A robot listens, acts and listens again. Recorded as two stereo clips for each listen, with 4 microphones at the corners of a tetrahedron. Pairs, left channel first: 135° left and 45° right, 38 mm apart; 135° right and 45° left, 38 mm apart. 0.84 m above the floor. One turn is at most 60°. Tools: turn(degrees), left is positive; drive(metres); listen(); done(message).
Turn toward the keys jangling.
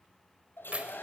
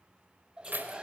turn(degrees=15)
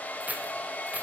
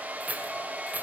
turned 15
done("Found it: keys jangling, straight ahead, 2 to 4 m away.")